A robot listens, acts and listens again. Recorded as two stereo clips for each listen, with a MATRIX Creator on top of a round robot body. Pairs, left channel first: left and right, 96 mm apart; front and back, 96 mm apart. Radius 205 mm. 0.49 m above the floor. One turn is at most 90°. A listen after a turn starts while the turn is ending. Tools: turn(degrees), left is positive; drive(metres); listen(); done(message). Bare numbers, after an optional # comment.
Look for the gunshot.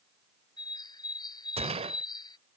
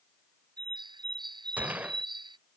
# The gunshot: 105° right.
turn(-90)
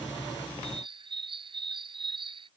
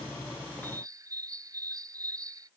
# Nothing new. It was at 15° right.
turn(-15)
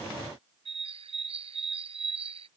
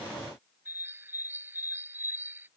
done("Facing where the gunshot came from. I can't hear it now.")